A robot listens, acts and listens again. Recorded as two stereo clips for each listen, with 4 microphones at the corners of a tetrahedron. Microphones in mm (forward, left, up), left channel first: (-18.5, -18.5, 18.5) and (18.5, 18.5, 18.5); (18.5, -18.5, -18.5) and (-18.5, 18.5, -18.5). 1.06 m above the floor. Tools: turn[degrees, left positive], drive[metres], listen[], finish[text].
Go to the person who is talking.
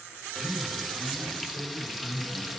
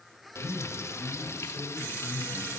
Thought: The man speaking: 175° right.
Action: turn[-175]
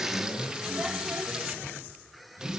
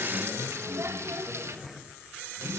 Thought: The man speaking is now 10° right.
Action: turn[-10]
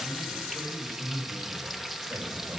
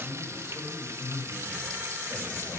Action: drive[1.0]
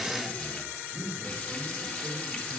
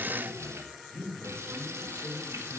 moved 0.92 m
Action: drive[1.0]
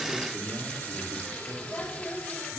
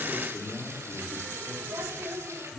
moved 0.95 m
Action: drive[1.0]
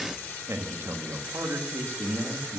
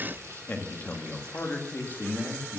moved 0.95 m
Thought: The man speaking is now 10° left.
Action: turn[10]
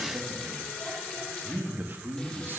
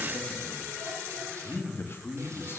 Action: drive[1.0]
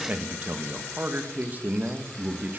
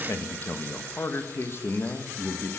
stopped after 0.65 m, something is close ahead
Thought: The man speaking is now 10° right.
Action: turn[-10]
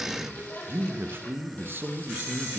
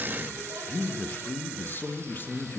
Action: finish[I am next to the man speaking.]